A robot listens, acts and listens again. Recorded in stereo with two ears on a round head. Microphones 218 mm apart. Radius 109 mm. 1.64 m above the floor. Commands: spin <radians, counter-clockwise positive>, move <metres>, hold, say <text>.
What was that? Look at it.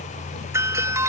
spin -0.52
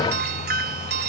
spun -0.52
spin -2.44
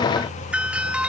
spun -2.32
say Found it: a doorbell, straight ahead.